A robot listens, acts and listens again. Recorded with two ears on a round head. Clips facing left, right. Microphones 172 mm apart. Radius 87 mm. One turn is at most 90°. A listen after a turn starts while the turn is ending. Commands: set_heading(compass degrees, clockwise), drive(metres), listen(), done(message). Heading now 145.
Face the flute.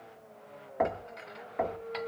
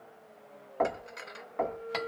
set_heading(195)
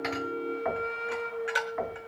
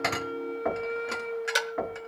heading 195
done("Found it: a flute, straight ahead.")